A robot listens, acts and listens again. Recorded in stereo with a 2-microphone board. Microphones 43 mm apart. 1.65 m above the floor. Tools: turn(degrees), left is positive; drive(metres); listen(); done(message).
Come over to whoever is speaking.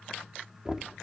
listen()
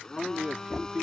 turn(degrees=-25)
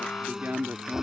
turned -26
turn(degrees=-130)
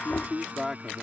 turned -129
drive(metres=1.0)
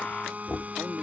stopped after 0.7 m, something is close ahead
done("Blocked. The man speaking is further on, straight ahead.")